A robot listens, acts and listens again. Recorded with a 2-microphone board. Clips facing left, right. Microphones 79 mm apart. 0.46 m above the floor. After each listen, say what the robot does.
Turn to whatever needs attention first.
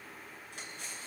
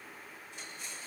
Keep listening.
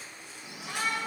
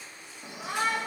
Turn 40° right.
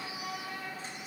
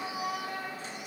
Turn 95° right.
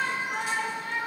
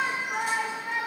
Turn 10° right.
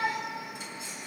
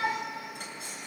Found it: a shout, straight ahead.